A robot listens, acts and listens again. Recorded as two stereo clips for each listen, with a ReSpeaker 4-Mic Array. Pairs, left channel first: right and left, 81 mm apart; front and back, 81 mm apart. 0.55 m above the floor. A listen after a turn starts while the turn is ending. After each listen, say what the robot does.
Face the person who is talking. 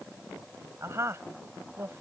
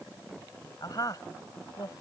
Turn 35° left.
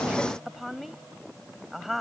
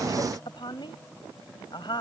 Found it: a woman speaking, straight ahead.